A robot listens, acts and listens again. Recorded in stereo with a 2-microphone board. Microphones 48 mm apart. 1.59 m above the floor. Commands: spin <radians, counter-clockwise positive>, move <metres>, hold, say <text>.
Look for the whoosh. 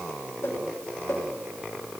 spin 1.57
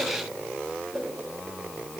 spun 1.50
say Facing the whoosh.